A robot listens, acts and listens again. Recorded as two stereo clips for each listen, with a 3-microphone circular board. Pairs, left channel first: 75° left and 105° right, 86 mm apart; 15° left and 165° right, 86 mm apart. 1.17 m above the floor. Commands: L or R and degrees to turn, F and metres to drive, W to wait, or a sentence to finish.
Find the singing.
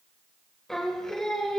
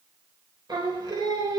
L160
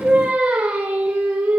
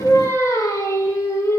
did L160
R40
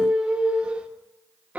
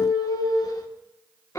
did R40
R35
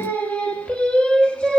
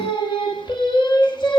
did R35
Facing the singing.